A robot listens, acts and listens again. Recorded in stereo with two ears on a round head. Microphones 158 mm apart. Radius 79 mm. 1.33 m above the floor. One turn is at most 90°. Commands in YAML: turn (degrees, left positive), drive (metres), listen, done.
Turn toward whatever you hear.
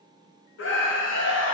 turn: 90
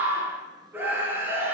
turn: -10
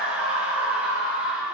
done: "Facing the scream."